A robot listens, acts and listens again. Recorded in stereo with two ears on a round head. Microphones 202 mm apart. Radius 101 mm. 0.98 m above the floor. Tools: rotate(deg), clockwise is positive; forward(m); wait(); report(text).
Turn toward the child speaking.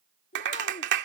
rotate(-35)
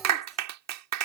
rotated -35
wait()
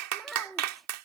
report("Found it: a child speaking, straight ahead.")